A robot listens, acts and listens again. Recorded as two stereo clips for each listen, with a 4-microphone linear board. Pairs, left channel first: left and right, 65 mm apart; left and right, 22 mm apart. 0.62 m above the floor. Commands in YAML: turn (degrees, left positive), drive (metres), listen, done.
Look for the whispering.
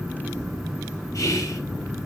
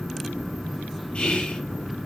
turn: 60
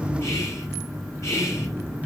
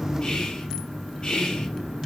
turn: 50
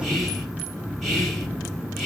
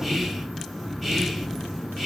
listen: true
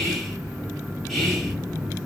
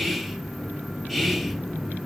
done: "Facing the whispering, 2 to 4 m away."